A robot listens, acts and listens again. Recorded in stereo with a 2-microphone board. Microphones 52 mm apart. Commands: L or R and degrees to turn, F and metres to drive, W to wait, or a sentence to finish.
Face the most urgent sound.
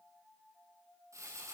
W
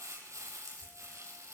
W
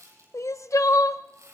L90
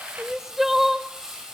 R10
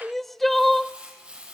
Facing the crying, under 1 m away.